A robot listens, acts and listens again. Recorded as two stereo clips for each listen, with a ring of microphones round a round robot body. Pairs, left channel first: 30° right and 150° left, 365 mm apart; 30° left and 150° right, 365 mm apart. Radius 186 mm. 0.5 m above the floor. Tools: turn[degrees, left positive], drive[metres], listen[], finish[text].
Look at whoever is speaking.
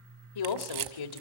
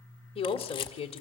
Thought: The woman speaking: 45° right.
Action: turn[-45]
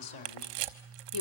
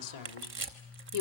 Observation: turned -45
Action: finish[Found it: a woman speaking, straight ahead.]